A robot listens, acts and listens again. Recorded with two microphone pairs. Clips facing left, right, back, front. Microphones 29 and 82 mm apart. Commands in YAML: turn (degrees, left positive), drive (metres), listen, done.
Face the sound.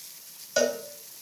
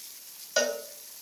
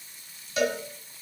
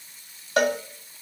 done: "Found it: a cowbell, straight ahead, 1 to 2 m away."